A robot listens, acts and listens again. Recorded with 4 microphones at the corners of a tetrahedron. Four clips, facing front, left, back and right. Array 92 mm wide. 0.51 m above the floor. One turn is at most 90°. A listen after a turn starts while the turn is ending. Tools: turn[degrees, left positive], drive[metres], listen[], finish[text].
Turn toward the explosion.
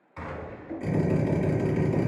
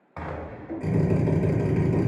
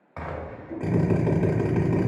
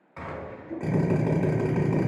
Thought: The explosion: 150° left.
Action: turn[90]
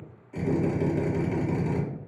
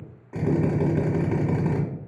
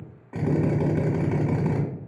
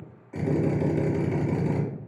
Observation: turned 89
Thought: Nothing new. It was at 60° left.
Action: turn[60]
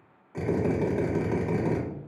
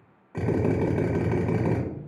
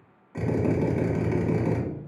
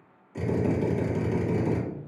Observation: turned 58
Action: finish[I heard an explosion from this way, but can't make it out now.]